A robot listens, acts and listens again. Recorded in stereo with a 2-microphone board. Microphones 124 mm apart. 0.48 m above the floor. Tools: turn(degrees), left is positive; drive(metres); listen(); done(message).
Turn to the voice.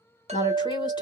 turn(degrees=35)
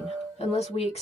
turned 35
turn(degrees=100)
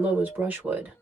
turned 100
turn(degrees=-15)
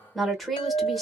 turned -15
done("Found it: a woman speaking, straight ahead, 1 to 2 m away.")